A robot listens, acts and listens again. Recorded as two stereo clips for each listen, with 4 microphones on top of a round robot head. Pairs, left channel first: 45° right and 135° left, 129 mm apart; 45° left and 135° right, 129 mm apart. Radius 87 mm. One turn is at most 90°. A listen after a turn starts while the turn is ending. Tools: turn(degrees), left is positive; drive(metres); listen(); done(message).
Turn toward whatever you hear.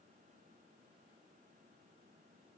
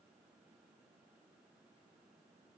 listen()
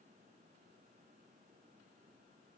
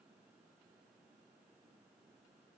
listen()
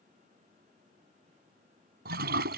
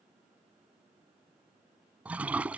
turn(degrees=90)
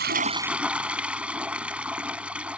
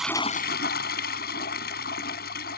turn(degrees=50)
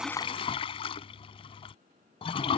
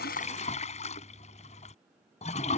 done("Found it: a toilet flushing, straight ahead.")